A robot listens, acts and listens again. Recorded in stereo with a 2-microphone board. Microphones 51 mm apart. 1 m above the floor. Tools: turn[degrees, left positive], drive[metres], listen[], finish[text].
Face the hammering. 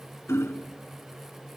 Thought: The hammering: about 55° left or 125° left.
Action: turn[55]
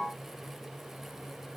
Action: listen[]
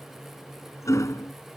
Thought: So it is at 70° left.
Action: turn[70]
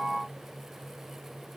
Action: listen[]
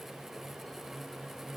Action: listen[]
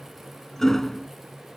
Thought: The hammering is now 10° left.
Action: turn[10]
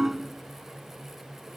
Action: finish[Facing the hammering.]